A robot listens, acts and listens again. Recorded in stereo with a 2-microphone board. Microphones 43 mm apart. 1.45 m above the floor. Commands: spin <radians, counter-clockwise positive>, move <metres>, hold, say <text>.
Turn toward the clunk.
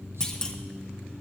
spin 0.26
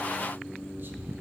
hold
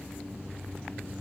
say I heard a clunk, but can't make it out now. It was about straight ahead or 150° left.